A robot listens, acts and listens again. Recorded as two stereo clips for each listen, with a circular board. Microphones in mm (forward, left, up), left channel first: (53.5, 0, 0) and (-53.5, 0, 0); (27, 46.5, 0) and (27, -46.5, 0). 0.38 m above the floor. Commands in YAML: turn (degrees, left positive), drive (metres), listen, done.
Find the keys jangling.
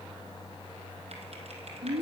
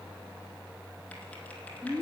listen: true
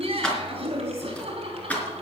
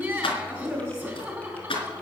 turn: 75
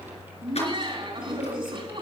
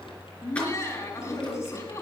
listen: true
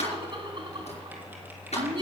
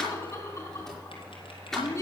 done: "Found it: keys jangling, straight ahead, over 4 m away."